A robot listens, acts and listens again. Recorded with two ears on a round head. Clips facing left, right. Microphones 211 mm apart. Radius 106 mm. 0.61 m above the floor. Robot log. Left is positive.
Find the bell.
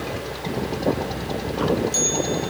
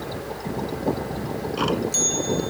cmd yaw -30
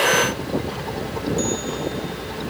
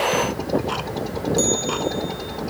cmd idle
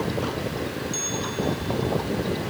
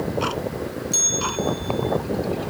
note: So it is at 145° right.
cmd yaw -145
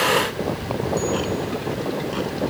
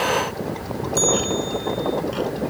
note: The bell is now 50° right.
cmd yaw -50
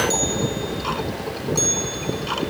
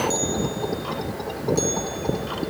note: The bell is now 20° left.
cmd yaw +20
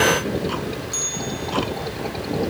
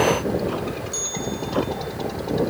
end: Found it: a bell, straight ahead.